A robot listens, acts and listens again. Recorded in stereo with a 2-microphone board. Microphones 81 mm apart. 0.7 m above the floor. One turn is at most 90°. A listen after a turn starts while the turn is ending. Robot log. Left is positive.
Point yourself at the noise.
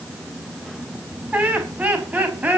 note: The laughter: about 20° right or 160° right.
cmd yaw -20
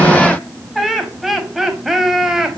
cmd yaw -30
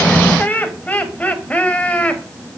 note: So it is at 15° left.
cmd yaw +15
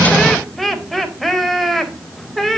end: Found it: laughter, straight ahead, 2 to 4 m away.